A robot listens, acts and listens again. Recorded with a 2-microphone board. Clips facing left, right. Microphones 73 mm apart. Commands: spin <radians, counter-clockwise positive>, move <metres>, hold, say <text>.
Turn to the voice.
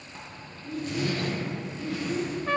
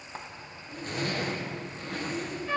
spin 1.13
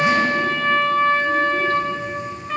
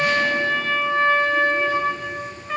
hold
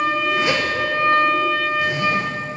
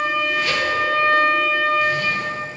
hold
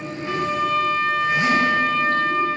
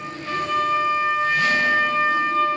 say I heard a child speaking, but can't make it out now. It was about straight ahead or 50° left.